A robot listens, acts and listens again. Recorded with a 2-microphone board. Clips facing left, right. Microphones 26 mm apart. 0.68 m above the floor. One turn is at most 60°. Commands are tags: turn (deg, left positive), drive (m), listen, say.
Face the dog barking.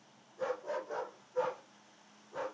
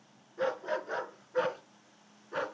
<turn deg="-60"/>
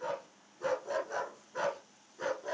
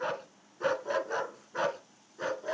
<turn deg="-15"/>
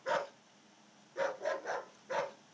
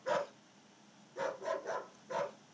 <turn deg="20"/>
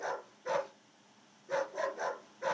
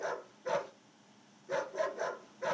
<say>Found it: a dog barking, straight ahead.</say>